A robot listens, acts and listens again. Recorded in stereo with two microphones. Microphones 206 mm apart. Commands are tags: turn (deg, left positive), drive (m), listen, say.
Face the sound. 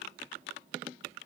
<listen/>
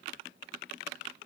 <listen/>
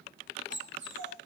<turn deg="-70"/>
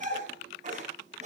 <turn deg="-35"/>
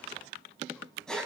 <say>Facing the dog barking, 2 to 4 m away.</say>